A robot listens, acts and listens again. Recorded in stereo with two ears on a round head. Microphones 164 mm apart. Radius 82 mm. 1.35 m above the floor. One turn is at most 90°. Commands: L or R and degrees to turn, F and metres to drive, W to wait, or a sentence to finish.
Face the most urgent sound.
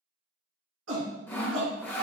R90
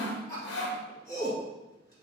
L20
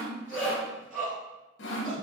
Found it: a shout, straight ahead.